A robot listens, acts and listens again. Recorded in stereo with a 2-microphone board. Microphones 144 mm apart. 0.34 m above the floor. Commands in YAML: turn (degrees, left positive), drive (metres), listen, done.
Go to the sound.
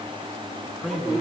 turn: -30
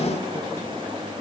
listen: true
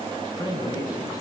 turn: 25
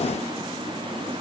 listen: true
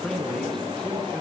drive: 1.0
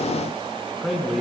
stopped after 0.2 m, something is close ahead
done: "Blocked. The man speaking is further on, straight ahead."